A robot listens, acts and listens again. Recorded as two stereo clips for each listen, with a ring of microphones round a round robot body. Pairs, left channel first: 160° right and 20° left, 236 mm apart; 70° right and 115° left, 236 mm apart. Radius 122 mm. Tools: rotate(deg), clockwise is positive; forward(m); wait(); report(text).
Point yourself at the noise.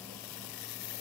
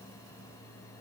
wait()
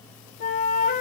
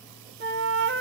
rotate(-150)
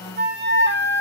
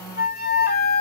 rotate(20)
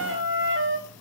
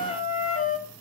rotate(10)
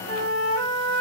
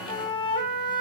report("Found it: a flute, straight ahead.")